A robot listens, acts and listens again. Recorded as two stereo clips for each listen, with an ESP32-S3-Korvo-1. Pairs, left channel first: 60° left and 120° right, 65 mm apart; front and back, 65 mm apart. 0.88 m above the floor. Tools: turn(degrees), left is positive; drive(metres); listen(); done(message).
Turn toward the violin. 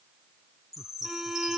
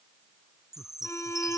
turn(degrees=-35)
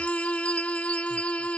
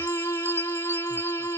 done("Facing the violin.")